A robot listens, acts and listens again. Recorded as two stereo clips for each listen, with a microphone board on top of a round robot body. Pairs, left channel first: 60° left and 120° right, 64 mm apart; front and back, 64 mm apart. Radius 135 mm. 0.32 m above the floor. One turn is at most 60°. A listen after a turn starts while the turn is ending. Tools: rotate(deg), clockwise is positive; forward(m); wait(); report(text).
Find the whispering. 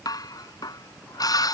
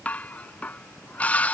wait()
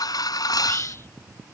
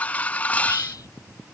rotate(-10)
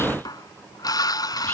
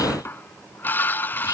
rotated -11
wait()
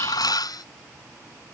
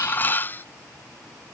wait()
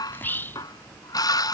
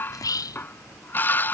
report("Facing the whispering.")